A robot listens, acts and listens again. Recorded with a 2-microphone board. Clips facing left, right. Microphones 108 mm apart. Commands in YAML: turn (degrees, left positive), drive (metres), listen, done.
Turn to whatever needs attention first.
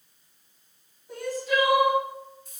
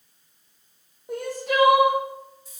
turn: -70
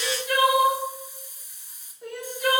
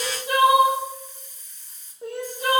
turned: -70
turn: -35
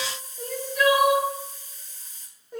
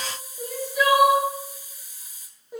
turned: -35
turn: -10
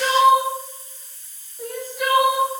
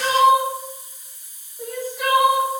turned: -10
done: "Found it: crying, straight ahead."